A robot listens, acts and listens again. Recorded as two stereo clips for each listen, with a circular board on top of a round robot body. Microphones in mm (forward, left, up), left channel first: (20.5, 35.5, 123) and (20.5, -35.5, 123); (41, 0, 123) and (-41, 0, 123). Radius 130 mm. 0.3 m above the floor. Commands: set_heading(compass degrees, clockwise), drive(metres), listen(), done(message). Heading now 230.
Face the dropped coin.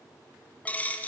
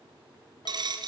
set_heading(70)
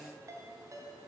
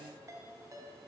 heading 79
set_heading(69)
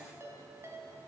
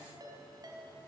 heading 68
done("I heard a dropped coin from this way, but can't make it out now.")